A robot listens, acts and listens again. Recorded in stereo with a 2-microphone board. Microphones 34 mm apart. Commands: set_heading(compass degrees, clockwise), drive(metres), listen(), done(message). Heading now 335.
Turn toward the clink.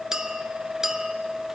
set_heading(355)
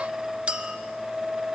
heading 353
set_heading(138)
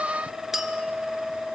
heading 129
set_heading(139)
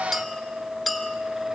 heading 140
done("Found it: a clink, straight ahead.")